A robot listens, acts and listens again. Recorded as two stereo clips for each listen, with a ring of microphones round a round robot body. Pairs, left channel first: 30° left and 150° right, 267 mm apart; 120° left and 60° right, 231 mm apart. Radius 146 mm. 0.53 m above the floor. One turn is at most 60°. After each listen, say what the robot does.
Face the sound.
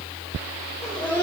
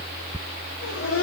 Turn 60° left.
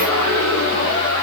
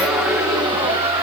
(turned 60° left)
Facing the laughter, 1 to 2 m away.